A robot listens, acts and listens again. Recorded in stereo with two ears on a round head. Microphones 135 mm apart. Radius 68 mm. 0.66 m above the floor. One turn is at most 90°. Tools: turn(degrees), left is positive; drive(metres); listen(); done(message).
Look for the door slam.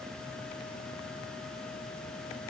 listen()
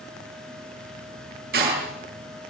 turn(degrees=-70)
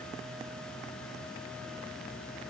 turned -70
listen()
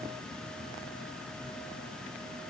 done("I heard a door slam, but can't make it out now. It was about straight ahead or 40° right.")